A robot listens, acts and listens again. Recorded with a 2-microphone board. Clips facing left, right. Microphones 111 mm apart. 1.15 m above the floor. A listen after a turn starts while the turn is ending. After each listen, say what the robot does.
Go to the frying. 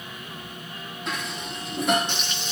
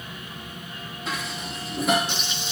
Turn 30° right.
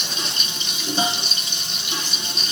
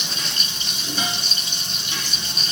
Turn 140° right.
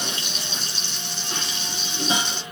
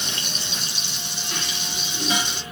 Turn 15° right.
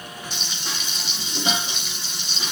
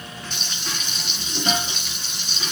Drive 1.0 m forward.
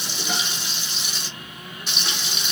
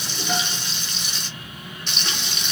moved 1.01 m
Drive 1.0 m forward.
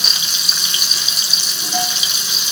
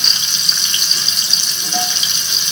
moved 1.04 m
Drive 1.0 m forward.
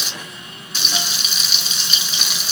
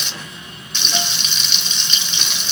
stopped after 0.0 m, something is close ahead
Arrived at the frying, straight ahead.